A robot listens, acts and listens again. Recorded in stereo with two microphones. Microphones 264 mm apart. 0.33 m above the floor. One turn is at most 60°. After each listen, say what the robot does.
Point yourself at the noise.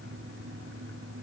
Keep listening.
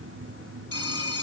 Turn 60° left.
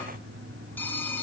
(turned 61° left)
Facing the phone ringing.